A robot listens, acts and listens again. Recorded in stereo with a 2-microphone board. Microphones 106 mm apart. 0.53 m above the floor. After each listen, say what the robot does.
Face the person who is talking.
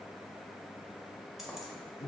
Keep listening.
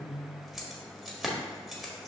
Keep listening.
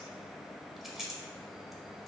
I can't make out anyone speaking to turn to.